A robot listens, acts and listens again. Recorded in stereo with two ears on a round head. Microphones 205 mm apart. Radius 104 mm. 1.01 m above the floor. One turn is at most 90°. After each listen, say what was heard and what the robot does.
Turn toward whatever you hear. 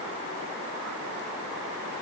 Keep listening.
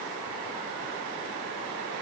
Keep listening.
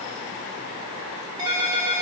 The ringtone: about 20° right or 160° right. Turn 20° right.
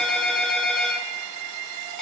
Facing the ringtone.